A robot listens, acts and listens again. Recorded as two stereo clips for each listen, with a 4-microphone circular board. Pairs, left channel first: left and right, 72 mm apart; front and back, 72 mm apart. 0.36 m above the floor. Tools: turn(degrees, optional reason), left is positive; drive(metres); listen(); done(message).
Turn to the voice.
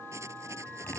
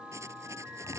listen()
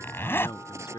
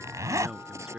turn(degrees=95, reason="The man speaking: 95° left.")
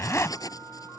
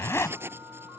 listen()
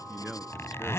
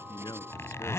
done("Facing the man speaking.")